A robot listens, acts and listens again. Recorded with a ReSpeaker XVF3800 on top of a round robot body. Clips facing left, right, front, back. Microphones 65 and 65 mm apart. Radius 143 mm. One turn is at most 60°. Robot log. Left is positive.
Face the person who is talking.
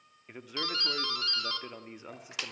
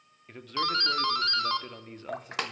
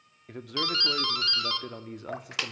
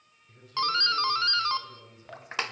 note: The man speaking: 10° left.
cmd yaw +10
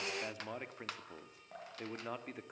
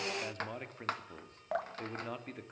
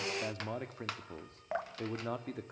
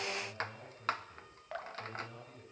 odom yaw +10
end: Found it: a man speaking, straight ahead, 2 to 4 m away.